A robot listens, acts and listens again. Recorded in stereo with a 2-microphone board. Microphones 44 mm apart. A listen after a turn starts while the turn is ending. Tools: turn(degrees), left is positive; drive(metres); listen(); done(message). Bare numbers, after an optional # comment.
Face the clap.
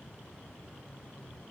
listen()
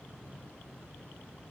listen()
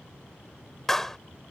turn(30)
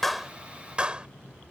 # So it is at 25° right.
turn(-25)
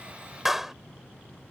done("Found it: a clap, straight ahead.")